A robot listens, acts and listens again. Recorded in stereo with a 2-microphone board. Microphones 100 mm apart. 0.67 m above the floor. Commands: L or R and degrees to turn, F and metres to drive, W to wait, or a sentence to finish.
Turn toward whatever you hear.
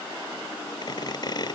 L45
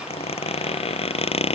L95
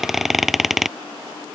Found it: a squeak, straight ahead.